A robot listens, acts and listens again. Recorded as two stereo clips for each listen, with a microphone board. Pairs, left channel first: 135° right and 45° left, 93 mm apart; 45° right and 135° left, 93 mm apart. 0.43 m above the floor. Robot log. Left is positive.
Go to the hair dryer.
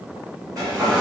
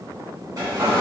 note: The hair dryer: 90° left.
cmd yaw +90
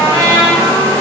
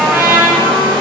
note: The hair dryer is now 10° right.
cmd yaw -10
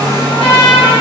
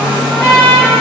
cmd fwd 1.0
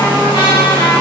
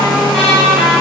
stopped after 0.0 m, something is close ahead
end: Blocked. The hair dryer is further on, straight ahead.